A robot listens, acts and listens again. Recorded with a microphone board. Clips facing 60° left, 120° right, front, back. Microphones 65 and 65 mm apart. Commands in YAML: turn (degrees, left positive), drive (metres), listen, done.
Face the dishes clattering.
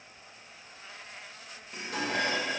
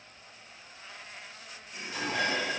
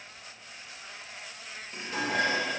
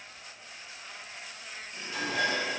turn: 35
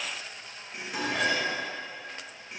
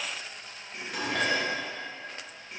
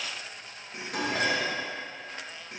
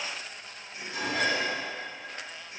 turn: -25
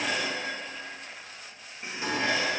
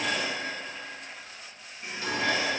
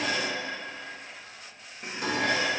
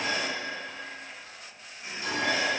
done: "Facing the dishes clattering."